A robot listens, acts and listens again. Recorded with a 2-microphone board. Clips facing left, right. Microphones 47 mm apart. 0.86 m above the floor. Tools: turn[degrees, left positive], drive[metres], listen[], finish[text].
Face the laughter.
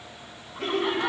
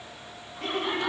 Thought: The laughter: about 70° left or 110° left.
Action: turn[70]
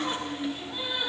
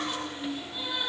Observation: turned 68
Thought: So it is at 25° left.
Action: turn[25]
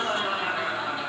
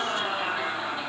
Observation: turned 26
Action: finish[Facing the laughter, 2 to 4 m away.]